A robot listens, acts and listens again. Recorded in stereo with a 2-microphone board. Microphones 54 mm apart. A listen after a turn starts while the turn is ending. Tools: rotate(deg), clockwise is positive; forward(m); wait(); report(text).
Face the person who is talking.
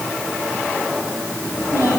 rotate(-90)
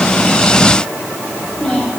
rotate(-15)
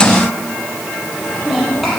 report("Facing the child speaking, over 4 m away.")